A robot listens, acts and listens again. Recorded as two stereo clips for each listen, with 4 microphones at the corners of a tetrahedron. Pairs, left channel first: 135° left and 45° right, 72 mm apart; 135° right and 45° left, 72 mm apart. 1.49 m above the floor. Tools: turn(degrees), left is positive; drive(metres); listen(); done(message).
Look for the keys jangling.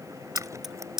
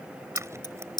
turn(degrees=-125)
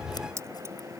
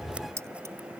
done("Found it: keys jangling, straight ahead.")